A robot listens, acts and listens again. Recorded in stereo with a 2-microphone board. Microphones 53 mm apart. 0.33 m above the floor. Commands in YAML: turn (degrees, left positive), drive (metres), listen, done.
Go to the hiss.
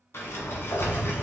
listen: true
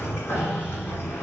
listen: true
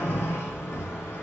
done: "I can't make out a hiss, only a sliding door."